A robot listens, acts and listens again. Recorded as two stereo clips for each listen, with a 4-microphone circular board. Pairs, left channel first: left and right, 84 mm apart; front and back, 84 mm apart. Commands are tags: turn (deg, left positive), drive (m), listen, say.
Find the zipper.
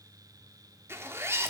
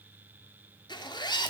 <turn deg="-30"/>
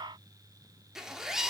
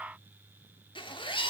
<say>Facing the zipper.</say>